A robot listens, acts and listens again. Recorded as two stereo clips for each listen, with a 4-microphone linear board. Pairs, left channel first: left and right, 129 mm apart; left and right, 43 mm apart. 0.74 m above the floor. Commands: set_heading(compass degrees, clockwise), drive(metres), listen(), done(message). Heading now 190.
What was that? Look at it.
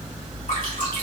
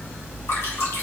set_heading(100)
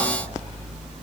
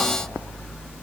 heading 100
listen()
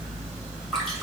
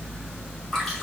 done("Facing the dripping.")